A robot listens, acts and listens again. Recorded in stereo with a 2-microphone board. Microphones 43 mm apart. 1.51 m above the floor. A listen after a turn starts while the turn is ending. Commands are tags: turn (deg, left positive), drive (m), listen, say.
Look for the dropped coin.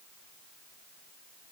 <listen/>
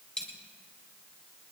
<turn deg="20"/>
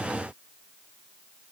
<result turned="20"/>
<listen/>
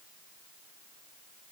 <say>I heard a dropped coin, but can't make it out now. It was about straight ahead or 140° left.</say>